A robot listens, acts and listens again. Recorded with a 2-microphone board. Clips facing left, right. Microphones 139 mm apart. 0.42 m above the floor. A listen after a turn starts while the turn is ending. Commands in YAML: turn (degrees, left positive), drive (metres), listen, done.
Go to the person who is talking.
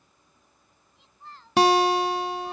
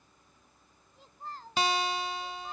turn: -40
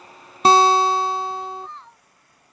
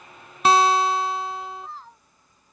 drive: 1.0
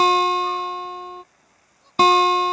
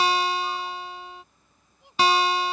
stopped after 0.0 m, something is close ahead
listen: true
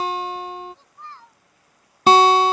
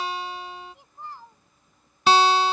turn: -15
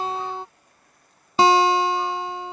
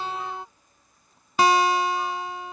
listen: true
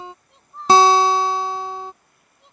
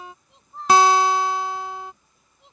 done: "Blocked. The child speaking is further on, straight ahead."